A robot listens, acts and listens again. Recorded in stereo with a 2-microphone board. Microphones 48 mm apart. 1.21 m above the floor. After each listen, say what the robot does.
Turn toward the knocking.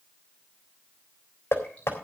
Turn 70° left.
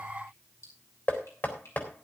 Turn 45° left.
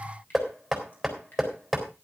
Found it: knocking, straight ahead, 2 to 4 m away.